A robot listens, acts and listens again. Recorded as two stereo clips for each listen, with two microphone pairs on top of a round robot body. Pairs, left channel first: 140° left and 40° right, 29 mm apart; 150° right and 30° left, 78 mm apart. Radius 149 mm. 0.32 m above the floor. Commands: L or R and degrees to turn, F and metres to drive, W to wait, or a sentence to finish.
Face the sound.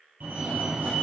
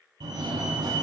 Facing the fire alarm.